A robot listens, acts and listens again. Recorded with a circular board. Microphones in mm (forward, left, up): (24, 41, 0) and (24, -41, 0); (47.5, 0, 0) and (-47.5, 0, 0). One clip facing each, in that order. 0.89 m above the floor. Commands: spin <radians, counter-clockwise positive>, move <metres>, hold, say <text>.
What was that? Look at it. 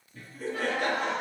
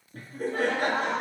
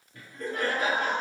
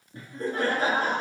spin -2.27
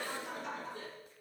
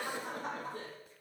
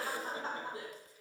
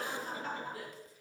spin -1.05
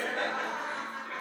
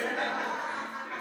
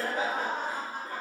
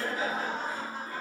spin -0.44
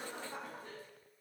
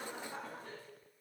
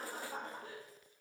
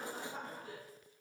say Found it: laughter, straight ahead, 2 to 4 m away.